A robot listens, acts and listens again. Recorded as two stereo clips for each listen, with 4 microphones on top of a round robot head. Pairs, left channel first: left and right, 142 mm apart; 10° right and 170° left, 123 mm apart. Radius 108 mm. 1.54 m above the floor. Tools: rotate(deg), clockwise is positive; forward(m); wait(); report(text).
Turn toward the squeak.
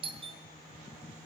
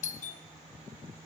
wait()
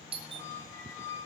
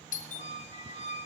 rotate(-15)
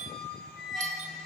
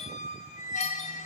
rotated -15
report("Found it: a squeak, straight ahead.")